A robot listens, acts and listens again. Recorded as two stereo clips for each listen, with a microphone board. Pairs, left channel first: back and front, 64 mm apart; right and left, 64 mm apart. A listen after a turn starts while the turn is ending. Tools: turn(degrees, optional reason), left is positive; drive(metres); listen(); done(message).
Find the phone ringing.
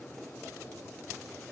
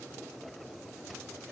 listen()
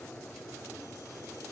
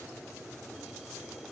listen()
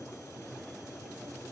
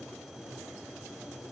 done("I can't make out a phone ringing.")